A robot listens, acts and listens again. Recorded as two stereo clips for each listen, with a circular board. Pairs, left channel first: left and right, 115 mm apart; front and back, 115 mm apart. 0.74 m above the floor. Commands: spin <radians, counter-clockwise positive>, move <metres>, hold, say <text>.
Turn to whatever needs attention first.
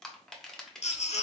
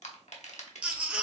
spin 1.75
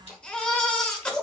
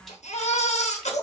spin 0.17
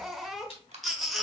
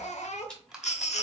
say Facing the baby crying, under 1 m away.